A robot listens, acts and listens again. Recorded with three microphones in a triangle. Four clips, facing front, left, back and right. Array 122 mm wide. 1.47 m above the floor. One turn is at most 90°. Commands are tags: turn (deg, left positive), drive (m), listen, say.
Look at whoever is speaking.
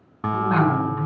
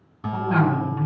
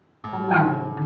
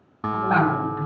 <turn deg="90"/>
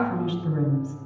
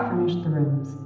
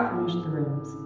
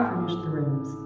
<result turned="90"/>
<turn deg="90"/>
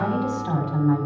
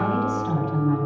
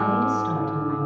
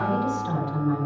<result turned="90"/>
<turn deg="15"/>
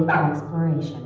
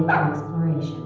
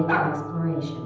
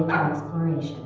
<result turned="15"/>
<say>Facing the woman speaking, over 4 m away.</say>